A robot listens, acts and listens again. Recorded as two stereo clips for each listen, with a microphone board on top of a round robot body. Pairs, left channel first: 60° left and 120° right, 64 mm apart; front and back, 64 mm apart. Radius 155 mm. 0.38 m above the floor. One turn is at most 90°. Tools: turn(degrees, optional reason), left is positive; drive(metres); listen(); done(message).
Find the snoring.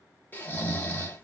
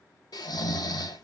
done("Facing the snoring.")